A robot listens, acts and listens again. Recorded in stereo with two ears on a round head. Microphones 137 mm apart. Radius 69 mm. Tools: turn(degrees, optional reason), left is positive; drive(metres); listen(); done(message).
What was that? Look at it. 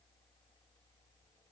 listen()
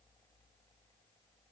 listen()
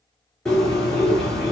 turn(degrees=30)
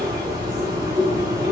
turn(degrees=-25, reason="So it is at 25° right.")
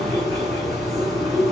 done("Found it: a bird, straight ahead.")